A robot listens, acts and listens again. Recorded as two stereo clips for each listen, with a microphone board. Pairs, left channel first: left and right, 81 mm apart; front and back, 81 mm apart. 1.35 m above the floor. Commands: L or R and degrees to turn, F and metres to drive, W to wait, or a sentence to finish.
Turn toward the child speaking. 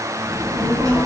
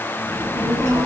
R45
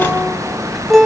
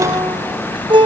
Facing the child speaking, over 4 m away.